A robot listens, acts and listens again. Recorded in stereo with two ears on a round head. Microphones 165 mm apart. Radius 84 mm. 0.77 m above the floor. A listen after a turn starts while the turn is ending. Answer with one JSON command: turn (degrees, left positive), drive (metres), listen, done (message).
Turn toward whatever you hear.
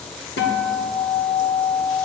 {"turn": 60}
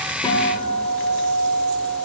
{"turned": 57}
{"done": "Facing the guitar."}